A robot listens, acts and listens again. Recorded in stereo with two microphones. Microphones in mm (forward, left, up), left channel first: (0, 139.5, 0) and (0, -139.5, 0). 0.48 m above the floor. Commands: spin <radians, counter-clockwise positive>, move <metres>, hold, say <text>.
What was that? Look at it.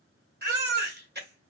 spin -0.61
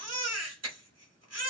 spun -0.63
spin -1.75
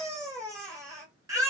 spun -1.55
spin -0.17
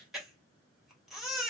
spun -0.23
say Facing the baby crying, 1 to 2 m away.